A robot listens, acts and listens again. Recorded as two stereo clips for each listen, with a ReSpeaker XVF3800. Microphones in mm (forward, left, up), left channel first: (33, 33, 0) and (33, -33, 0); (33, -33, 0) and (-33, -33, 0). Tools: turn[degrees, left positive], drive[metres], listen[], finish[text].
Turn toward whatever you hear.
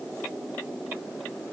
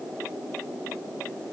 Action: listen[]
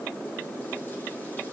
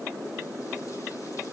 Action: listen[]
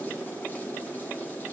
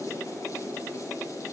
Action: finish[I can't make out anything.]